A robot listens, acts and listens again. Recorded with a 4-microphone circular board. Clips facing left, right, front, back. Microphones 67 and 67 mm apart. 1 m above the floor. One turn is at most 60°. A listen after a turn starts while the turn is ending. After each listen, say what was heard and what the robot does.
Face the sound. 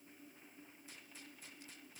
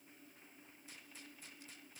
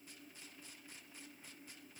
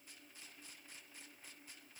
Keep listening.
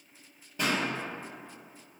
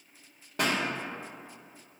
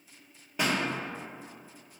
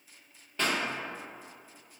The pop: 80° right. Turn 60° right.
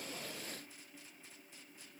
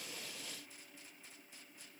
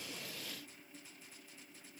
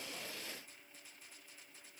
Nothing new. It was at 20° right. Turn 20° right.
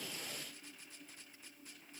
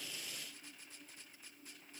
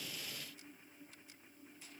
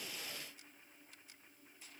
I heard a pop from this way, but can't make it out now.